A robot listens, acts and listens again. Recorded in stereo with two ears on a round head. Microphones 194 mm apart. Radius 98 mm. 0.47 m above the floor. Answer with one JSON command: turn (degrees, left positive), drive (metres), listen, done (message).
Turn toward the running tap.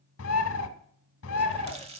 {"turn": -25}
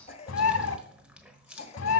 {"done": "Facing the running tap, 1 to 2 m away."}